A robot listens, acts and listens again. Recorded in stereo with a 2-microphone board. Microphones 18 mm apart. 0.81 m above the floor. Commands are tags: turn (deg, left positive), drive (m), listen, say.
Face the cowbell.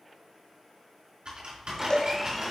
<turn deg="40"/>
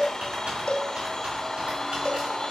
<turn deg="95"/>
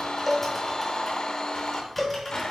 <say>Found it: a cowbell, straight ahead.</say>